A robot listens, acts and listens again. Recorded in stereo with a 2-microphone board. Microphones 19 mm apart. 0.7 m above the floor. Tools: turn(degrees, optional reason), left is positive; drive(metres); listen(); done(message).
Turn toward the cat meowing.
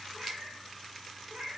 turn(degrees=-65, reason="The cat meowing: about 65° right or 115° right.")
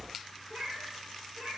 turn(degrees=-40, reason="So it is at 40° right.")
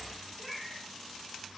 done("Facing the cat meowing.")